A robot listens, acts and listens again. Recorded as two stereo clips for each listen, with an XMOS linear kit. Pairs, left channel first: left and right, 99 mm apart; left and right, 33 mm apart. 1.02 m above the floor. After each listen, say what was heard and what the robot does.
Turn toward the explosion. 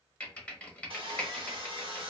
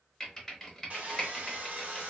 Keep listening.
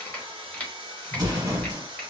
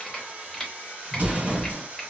The explosion: about 40° right or 140° right. Turn 40° right.
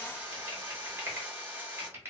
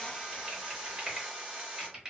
Keep listening.
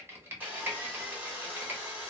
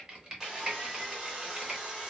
I heard an explosion, but can't make it out now. It was about straight ahead or 100° right.